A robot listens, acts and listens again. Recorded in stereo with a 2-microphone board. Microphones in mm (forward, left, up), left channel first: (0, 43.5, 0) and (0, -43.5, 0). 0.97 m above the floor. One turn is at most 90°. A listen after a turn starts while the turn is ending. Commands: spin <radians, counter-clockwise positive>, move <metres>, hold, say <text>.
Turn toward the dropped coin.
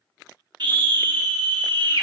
hold
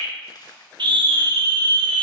spin 0.87
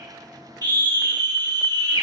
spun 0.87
hold
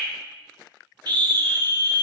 say I heard a dropped coin, but can't make it out now. It was about straight ahead or 80° left.